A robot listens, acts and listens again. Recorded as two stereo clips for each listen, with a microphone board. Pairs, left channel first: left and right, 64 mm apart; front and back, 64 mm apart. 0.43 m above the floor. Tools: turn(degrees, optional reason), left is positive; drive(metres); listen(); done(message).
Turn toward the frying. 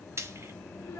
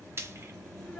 turn(degrees=-135, reason="The frying: 135° right.")
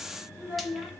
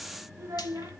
listen()
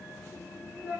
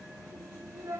listen()
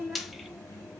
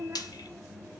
done("Facing the frying, under 1 m away.")